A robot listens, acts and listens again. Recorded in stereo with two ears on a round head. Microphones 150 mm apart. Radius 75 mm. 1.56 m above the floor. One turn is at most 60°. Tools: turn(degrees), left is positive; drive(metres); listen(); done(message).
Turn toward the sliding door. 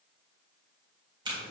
listen()
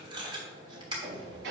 turn(degrees=-60)
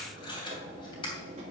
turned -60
turn(degrees=-40)
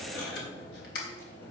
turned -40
turn(degrees=10)
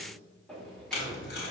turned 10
done("Found it: a sliding door, straight ahead.")